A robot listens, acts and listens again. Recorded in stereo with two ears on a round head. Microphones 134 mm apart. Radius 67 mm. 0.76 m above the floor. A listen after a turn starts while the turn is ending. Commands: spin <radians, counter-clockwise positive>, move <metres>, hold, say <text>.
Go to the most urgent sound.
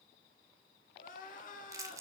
spin 0.96
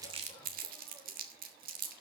hold
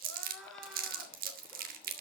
move 1.0
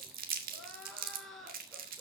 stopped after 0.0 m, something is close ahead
say Something is in my way. I am facing the crying but have not reached it.